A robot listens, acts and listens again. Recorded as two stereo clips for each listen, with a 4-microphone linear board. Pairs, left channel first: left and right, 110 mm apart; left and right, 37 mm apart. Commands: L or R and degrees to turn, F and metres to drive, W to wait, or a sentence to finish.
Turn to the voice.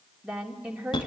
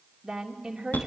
R30
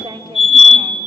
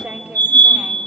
R140
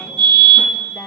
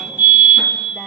W
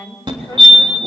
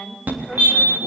L10
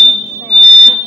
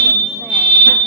W
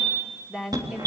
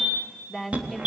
Found it: a woman speaking, straight ahead, 2 to 4 m away.